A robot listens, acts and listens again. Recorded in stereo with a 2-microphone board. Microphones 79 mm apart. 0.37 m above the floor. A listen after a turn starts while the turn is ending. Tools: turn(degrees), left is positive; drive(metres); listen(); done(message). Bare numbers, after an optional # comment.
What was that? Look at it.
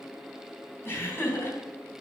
# The laughter: about 30° left or 150° left.
turn(30)
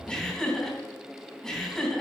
# So it is at 10° left.
turn(10)
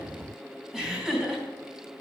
done("Facing the laughter, 2 to 4 m away.")